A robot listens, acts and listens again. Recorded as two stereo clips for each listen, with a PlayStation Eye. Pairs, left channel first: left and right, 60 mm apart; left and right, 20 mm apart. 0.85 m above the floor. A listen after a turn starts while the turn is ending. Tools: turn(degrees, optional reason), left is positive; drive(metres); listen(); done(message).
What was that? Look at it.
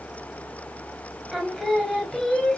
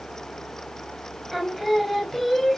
turn(degrees=30)
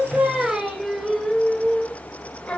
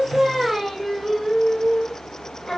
turn(degrees=20, reason="The singing: about 20° left or 160° left.")
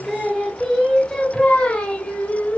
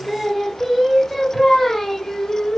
turn(degrees=25, reason="The singing: about 25° left or 155° left.")
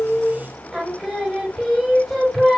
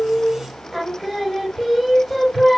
turn(degrees=30)
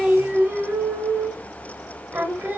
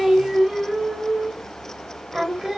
turn(degrees=-35, reason="So it is at 35° right.")
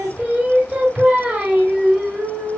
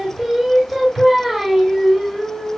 turn(degrees=-20, reason="The singing is now 20° right.")
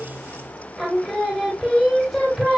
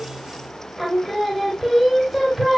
done("Found it: singing, straight ahead, 1 to 2 m away.")